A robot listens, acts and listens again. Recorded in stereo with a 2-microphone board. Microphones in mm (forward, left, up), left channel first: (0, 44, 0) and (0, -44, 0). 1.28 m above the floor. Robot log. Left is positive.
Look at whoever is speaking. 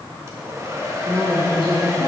note: The woman speaking: about 55° right or 125° right.
cmd yaw -55
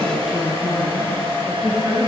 end: Facing the woman speaking.